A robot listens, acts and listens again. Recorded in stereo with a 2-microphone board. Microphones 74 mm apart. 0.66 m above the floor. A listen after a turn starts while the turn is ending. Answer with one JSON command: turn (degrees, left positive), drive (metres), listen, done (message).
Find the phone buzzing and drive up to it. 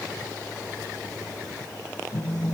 {"turn": 15}
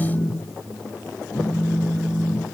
{"drive": 1.0}
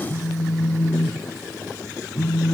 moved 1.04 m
{"turn": 10}
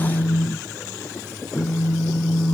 {"drive": 1.0}
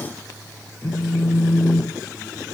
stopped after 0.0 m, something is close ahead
{"done": "I am next to the phone buzzing."}